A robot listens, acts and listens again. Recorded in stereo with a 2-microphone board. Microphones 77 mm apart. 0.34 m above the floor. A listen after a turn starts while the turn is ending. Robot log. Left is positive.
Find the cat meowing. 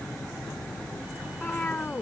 note: The cat meowing: about 20° left or 160° left.
cmd yaw +20
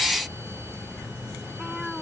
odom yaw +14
cmd idle
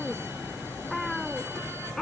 cmd yaw +30
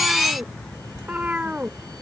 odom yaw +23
note: So it is at 20° right.
cmd yaw -20
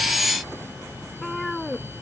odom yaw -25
end: Facing the cat meowing.